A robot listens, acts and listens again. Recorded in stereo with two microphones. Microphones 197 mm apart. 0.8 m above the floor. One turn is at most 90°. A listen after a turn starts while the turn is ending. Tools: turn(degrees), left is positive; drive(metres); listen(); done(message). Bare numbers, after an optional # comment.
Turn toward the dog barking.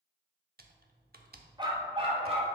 # The dog barking: about 30° right or 150° right.
turn(-30)
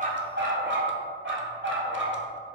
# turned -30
# So it is at 105° right.
turn(-90)
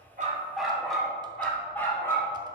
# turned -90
# The dog barking is now 10° left.
turn(10)
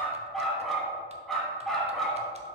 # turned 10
done("Found it: a dog barking, straight ahead, 1 to 2 m away.")